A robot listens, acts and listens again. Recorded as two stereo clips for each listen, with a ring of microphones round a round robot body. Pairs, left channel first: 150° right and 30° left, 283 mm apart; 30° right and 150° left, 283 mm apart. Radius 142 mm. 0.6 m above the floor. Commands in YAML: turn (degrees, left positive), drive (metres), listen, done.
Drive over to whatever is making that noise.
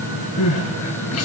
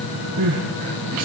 turn: 170
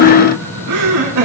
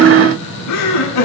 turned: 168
drive: 1.0
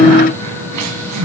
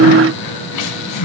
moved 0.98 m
drive: 1.0
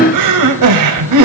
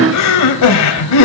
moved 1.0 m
drive: 1.0
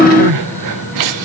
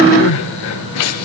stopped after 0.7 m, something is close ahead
done: "Arrived at the crying, straight ahead."